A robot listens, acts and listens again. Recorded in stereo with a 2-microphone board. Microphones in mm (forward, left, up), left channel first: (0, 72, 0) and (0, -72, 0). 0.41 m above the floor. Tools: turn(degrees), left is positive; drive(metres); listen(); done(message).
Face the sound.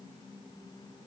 listen()
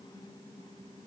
listen()
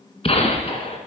turn(degrees=40)
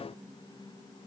listen()
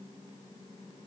done("I heard a gunshot, but can't make it out now. It was about straight ahead or 100° left.")